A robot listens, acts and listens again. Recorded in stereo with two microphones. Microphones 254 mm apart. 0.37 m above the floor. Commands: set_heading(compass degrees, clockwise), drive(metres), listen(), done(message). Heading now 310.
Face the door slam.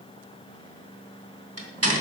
set_heading(20)
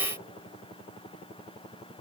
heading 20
listen()
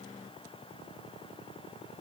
done("I heard a door slam, but can't make it out now. It was about straight ahead or 40° right.")